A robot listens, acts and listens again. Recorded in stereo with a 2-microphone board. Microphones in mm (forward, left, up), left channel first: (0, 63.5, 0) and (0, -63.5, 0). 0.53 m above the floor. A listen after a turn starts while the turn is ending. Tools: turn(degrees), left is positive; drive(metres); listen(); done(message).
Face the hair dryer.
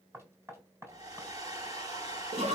turn(degrees=-35)
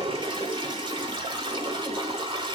listen()
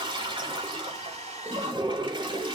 turn(degrees=-110)
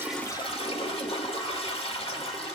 listen()
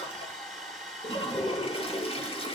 done("Facing the hair dryer.")